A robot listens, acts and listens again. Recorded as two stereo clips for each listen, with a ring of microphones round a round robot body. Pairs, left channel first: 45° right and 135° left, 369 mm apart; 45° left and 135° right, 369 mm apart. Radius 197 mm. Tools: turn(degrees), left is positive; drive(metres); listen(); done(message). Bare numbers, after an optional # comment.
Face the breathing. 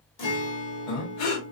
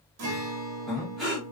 # The breathing: 45° right.
turn(-45)
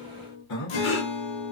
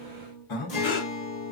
# The breathing is now 10° left.
turn(10)
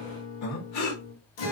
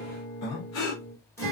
done("Found it: breathing, straight ahead, under 1 m away.")